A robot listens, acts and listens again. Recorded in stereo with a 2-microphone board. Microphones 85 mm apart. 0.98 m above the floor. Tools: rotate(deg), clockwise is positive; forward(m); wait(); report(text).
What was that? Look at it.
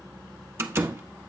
rotate(30)
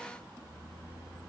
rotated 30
wait()
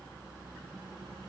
report("I heard a door slam, but can't make it out now. It was about straight ahead or 120° right.")